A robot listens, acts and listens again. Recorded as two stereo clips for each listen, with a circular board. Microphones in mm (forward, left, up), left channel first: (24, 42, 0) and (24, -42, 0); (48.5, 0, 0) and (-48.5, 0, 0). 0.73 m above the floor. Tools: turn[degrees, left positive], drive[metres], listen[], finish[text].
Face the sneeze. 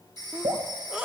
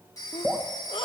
Thought: The sneeze: 15° right.
Action: turn[-15]
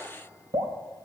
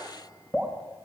Action: finish[I heard a sneeze from this way, but can't make it out now.]